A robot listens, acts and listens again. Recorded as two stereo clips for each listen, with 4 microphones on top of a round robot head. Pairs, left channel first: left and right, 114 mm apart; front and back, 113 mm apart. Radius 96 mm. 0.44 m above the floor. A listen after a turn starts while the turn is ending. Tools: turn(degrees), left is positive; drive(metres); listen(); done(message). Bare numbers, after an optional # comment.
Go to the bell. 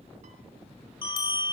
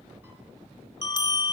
# The bell: 45° left.
turn(45)
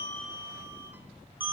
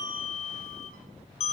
# The bell is now 15° right.
turn(-15)
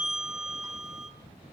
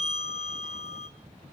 drive(1.0)
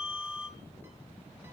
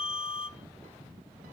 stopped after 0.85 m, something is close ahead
# The bell is now 10° right.
turn(-10)
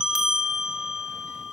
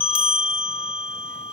done("Arrived at the bell, straight ahead.")